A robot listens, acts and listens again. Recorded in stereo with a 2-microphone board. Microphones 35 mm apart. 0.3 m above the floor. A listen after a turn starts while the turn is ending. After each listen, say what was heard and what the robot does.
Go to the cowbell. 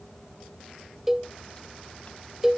Turn 30° right.
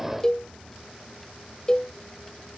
So it is at 20° left. Turn 20° left.
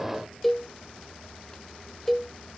Drive 1.0 m forward.
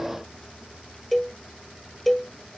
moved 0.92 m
Drive 1.0 m forward.
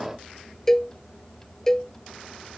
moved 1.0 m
The cowbell is now 15° left. Turn 15° left.
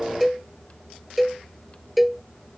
Drive 1.0 m forward.
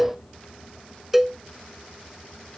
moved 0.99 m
Drive 1.0 m forward.
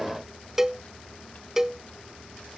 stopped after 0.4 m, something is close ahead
The cowbell is now 15° right. Turn 15° right.
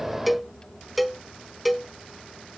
Arrived at the cowbell, straight ahead.